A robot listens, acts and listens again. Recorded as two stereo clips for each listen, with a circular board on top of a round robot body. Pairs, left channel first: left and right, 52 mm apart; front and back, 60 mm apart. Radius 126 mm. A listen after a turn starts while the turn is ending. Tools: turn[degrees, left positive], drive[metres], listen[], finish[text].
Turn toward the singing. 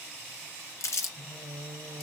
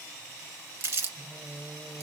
Thought: The singing: 105° right.
Action: turn[-105]
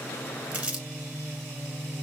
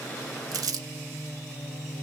Thought: The singing is now 25° right.
Action: turn[-25]
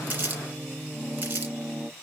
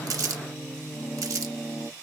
Thought: The singing is now 15° right.
Action: turn[-15]
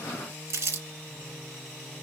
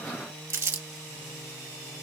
Action: finish[Facing the singing, over 4 m away.]